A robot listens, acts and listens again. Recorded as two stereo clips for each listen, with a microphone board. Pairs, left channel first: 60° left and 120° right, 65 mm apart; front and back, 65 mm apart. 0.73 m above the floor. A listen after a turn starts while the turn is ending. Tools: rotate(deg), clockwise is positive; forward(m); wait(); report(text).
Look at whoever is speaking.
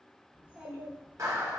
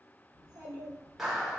rotate(-170)
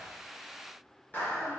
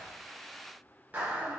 wait()
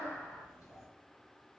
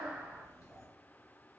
rotate(-25)
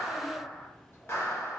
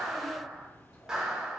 rotate(-10)
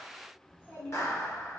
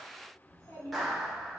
report("Found it: a child speaking, straight ahead, 1 to 2 m away.")